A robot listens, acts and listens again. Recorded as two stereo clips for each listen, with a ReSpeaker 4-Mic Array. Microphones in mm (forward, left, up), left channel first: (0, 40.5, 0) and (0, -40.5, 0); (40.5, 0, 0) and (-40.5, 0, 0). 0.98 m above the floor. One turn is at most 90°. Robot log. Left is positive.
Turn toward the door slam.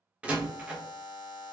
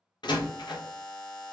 note: The door slam: 15° right.
cmd yaw -15
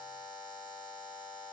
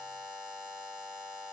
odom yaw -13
end: I heard a door slam from this way, but can't make it out now.